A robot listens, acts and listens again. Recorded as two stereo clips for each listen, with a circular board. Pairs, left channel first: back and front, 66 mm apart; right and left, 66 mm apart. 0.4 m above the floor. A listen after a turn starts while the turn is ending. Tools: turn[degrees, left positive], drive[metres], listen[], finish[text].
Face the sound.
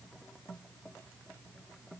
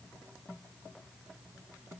Action: listen[]
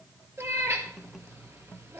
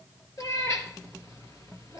Thought: The cat meowing: 50° right.
Action: turn[-50]
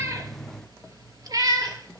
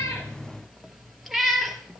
Action: finish[Facing the cat meowing.]